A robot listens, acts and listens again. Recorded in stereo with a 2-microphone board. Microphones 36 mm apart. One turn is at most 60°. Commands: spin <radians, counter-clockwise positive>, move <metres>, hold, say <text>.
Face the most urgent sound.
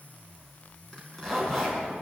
hold
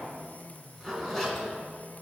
hold
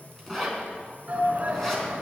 spin -0.70
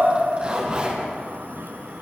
spin -1.05
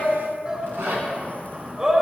spin -0.52
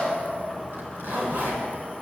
hold
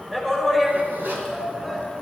spin -0.17
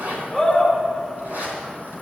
say Found it: a shout, straight ahead, over 4 m away.